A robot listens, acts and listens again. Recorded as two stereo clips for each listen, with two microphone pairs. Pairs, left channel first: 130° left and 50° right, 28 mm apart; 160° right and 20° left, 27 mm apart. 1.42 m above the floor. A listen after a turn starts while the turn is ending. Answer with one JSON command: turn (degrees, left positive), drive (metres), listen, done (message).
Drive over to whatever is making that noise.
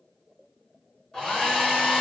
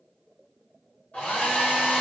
{"turn": -165}
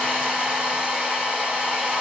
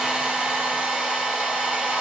{"turn": -10}
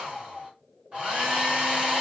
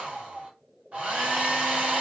{"drive": 1.0}
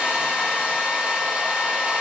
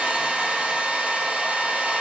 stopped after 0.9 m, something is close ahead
{"turn": -10}
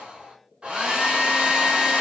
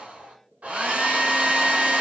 {"done": "I am next to the hair dryer."}